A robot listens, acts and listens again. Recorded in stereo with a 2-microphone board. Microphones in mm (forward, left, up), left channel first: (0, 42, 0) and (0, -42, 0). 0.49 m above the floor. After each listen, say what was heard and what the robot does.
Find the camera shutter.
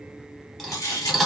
The camera shutter: about 40° left or 140° left. Turn 40° left.
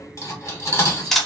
Found it: a camera shutter, straight ahead, under 1 m away.